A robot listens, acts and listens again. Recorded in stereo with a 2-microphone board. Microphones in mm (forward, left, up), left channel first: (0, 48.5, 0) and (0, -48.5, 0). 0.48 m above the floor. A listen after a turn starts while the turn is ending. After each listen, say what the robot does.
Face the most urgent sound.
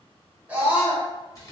Turn 15° right.
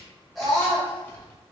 Found it: a scream, straight ahead, 1 to 2 m away.